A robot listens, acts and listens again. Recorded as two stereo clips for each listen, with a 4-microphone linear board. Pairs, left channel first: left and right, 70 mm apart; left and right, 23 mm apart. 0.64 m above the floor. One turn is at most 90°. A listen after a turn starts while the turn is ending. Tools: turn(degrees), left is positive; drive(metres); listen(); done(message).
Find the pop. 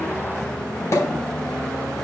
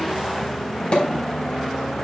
turn(degrees=45)
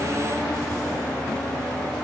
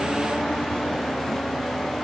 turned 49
listen()
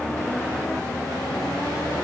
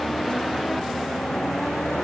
done("I heard a pop, but can't make it out now. It was about 5° right or 90° left.")